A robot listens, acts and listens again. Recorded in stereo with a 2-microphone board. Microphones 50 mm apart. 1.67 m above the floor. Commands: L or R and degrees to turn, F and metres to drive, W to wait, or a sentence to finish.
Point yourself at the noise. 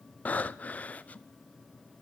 L30
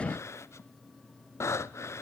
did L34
L120
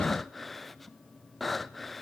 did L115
Facing the breathing.